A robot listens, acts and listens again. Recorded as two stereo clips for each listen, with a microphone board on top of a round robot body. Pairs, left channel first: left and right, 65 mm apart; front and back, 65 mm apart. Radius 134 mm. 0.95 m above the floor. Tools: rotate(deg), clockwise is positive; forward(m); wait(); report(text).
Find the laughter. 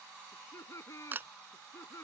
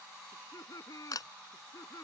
rotate(-45)
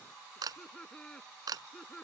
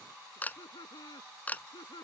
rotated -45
rotate(-10)
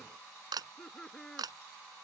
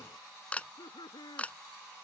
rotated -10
rotate(-10)
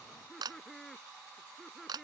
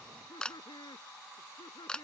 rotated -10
report("Facing the laughter.")